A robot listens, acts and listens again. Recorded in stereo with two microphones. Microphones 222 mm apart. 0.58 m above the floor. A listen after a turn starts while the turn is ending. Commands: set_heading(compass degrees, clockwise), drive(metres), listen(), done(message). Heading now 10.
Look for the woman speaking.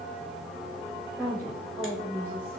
set_heading(340)
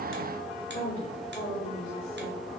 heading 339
set_heading(189)
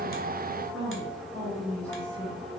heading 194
done("Found it: a woman speaking, straight ahead, 2 to 4 m away.")